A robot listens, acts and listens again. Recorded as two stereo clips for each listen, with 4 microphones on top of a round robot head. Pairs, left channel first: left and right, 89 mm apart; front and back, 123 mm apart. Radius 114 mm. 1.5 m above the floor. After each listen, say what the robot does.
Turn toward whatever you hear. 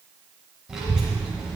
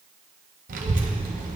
Turn 175° right.
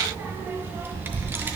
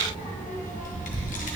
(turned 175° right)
Turn 25° right.
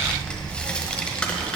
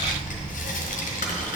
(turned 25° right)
Turn 10° left.
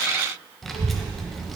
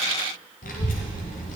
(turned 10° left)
Found it: a child speaking, straight ahead.